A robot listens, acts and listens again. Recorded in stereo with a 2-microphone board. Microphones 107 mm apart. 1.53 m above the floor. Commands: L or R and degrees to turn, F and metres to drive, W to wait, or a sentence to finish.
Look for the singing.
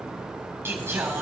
R25
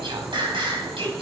R125
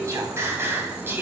R20
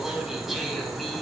Found it: singing, straight ahead, 2 to 4 m away.